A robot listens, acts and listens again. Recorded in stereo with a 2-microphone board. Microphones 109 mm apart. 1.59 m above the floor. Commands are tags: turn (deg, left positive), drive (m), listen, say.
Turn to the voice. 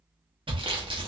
<listen/>
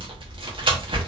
<listen/>
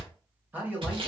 <turn deg="-30"/>
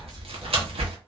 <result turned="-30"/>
<listen/>
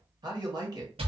<turn deg="-135"/>
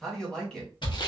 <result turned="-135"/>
<say>Facing the man speaking.</say>